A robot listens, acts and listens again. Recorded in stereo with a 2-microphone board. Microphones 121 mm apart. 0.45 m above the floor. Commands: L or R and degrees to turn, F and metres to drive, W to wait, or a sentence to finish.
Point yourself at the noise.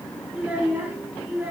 R20
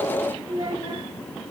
R135
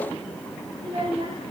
R45
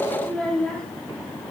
Found it: a child speaking, straight ahead, over 4 m away.